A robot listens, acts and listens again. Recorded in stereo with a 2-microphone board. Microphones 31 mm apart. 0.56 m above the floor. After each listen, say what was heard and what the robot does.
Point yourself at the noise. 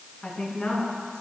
The woman speaking: about 35° left or 145° left. Turn 35° left.
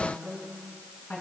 So it is at 115° left. Turn 115° left.
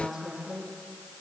Facing the woman speaking.